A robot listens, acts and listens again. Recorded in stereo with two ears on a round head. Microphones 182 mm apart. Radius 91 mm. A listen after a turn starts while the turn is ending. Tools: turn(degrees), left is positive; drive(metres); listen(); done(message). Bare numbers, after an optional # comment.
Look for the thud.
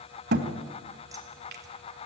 # The thud: about 55° right or 125° right.
turn(-55)
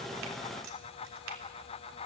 listen()
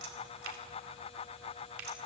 done("I heard a thud, but can't make it out now. It was about straight ahead or 70° right.")